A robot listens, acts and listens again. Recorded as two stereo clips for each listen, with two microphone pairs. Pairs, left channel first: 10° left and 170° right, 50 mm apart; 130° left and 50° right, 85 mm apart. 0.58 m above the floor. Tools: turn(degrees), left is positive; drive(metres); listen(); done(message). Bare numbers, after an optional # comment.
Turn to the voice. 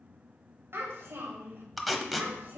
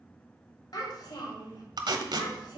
# The child speaking: 145° left.
turn(145)
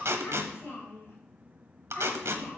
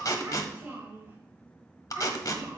done("Facing the child speaking, 2 to 4 m away.")